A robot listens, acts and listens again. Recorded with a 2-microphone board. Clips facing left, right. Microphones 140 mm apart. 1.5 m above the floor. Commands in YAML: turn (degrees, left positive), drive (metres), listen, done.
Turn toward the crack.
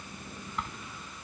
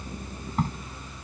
turn: -40
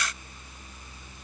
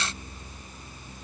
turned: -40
listen: true
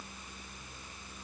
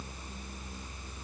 done: "I heard a crack, but can't make it out now. It was about straight ahead or 100° right."